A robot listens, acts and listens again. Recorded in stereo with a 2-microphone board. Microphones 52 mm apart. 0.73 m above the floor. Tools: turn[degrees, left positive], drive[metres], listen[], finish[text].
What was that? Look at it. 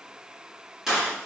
Action: turn[-30]
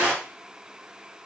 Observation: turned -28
Thought: So it is at 145° right.
Action: turn[-145]
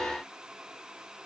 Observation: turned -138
Thought: Nothing new. It was at 10° right.
Action: turn[-10]
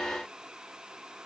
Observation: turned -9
Action: finish[I heard a gunshot from this way, but can't make it out now.]